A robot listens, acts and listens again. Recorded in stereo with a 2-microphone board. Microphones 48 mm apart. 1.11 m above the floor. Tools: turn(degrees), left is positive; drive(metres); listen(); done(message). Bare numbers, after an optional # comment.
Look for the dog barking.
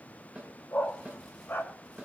# The dog barking: about 45° left or 135° left.
turn(45)
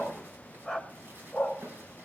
done("Found it: a dog barking, straight ahead.")